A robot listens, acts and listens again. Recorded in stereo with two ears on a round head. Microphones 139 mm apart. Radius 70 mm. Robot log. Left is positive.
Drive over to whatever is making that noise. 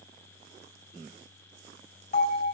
note: The bell: about 50° left or 130° left.
cmd yaw +50
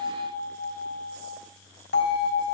note: So it is at 80° left.
cmd yaw +80
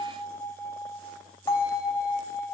note: The bell is now 15° left.
cmd yaw +15
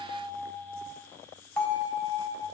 cmd fwd 1.0
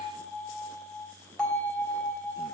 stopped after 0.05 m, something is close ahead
end: Blocked. The bell is further on, straight ahead.